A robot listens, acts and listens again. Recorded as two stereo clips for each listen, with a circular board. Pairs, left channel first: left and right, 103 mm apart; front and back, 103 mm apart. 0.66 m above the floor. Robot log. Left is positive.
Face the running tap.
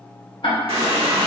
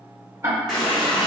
note: The running tap: 85° right.
cmd yaw -85
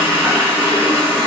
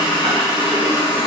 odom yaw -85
note: The running tap is now 20° right.
cmd yaw -20
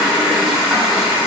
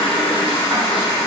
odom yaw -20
end: Facing the running tap.